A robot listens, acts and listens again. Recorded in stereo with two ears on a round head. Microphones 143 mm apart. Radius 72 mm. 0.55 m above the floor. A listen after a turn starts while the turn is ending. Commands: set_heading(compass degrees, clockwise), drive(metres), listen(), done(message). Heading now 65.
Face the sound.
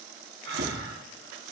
set_heading(155)
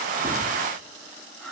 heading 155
done("Found it: breathing, straight ahead.")